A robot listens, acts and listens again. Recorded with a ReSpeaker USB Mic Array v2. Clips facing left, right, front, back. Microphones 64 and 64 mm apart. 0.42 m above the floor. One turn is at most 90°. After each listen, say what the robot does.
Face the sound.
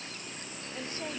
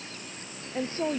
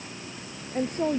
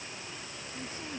Turn 35° right.
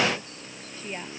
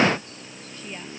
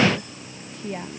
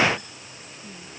Turn 20° left.
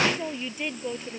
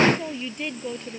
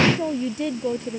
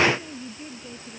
Found it: a woman speaking, straight ahead.